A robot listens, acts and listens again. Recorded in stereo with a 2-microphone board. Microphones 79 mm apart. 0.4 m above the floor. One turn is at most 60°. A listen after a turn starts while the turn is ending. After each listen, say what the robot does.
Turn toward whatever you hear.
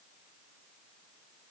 Keep listening.
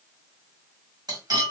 Turn 55° right.
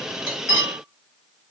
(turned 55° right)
Found it: cutlery clinking, straight ahead, 1 to 2 m away.